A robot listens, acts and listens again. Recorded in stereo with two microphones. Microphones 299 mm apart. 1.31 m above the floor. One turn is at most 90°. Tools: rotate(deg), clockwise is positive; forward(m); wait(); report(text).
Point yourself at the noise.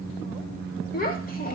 rotate(-30)
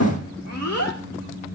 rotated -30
rotate(-90)
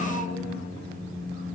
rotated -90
rotate(-30)
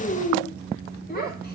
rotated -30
rotate(-35)
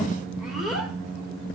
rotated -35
report("Found it: a child speaking, straight ahead, over 4 m away.")